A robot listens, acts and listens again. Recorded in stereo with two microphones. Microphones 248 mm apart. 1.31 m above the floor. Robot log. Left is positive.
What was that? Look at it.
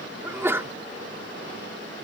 cmd yaw -30
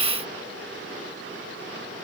cmd idle
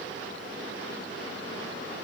end: I heard a sneeze, but can't make it out now. It was about 20° left or 140° right.